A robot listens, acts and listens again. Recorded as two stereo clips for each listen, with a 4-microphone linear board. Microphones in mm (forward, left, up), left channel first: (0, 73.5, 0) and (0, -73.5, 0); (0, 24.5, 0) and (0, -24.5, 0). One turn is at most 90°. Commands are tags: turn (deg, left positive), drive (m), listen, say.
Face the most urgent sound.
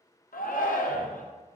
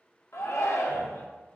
<turn deg="90"/>
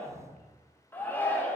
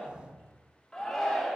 <turn deg="15"/>
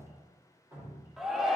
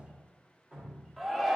<say>Facing the shout, under 1 m away.</say>